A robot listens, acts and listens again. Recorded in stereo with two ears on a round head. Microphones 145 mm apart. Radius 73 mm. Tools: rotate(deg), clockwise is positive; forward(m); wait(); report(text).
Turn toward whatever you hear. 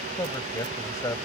rotate(-20)
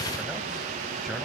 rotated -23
wait()
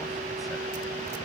wait()
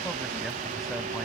report("I heard a man speaking, but can't make it out now. It was about 5° right or 135° left.")